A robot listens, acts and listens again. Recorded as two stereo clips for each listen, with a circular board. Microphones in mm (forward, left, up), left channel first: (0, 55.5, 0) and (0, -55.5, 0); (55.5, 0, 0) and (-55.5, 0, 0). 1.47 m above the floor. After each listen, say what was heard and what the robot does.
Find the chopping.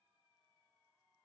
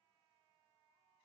Keep listening.
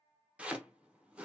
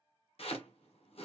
The chopping: 15° right. Turn 15° right.
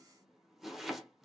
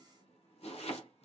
Facing the chopping.